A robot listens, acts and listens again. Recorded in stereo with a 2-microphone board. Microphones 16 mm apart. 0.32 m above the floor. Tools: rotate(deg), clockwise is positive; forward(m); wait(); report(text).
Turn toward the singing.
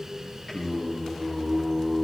rotate(-50)
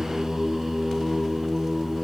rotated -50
rotate(-20)
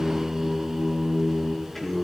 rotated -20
rotate(-25)
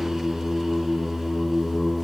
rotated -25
rotate(-25)
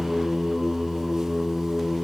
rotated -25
rotate(-20)
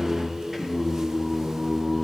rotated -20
report("Found it: singing, straight ahead, over 4 m away.")